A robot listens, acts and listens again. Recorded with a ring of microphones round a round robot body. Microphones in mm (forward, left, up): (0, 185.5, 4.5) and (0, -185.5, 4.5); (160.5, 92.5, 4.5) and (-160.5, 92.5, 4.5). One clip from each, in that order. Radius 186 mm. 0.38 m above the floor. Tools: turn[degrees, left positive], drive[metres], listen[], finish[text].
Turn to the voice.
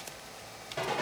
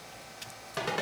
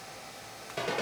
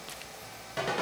Action: listen[]
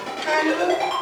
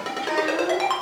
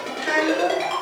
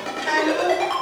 Thought: The child speaking: 105° left.
Action: turn[105]
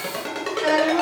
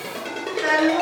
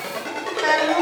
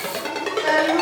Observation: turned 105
Thought: The child speaking is now 10° right.
Action: turn[-10]
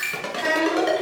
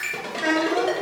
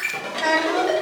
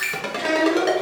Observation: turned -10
Action: finish[Found it: a child speaking, straight ahead.]